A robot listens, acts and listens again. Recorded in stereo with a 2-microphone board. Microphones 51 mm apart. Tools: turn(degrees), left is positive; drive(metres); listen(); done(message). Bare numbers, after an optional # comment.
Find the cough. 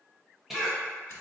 turn(-30)
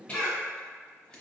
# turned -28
# So it is at 25° left.
turn(25)
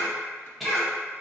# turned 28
done("Facing the cough.")